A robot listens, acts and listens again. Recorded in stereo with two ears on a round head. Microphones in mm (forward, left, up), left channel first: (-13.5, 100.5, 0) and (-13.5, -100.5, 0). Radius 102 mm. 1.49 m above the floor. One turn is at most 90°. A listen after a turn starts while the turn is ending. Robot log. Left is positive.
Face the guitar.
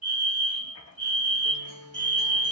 note: The guitar: about 50° right or 130° right.
cmd yaw -50
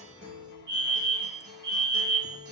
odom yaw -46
note: So it is at 65° right.
cmd yaw -65
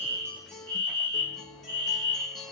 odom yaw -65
end: Facing the guitar.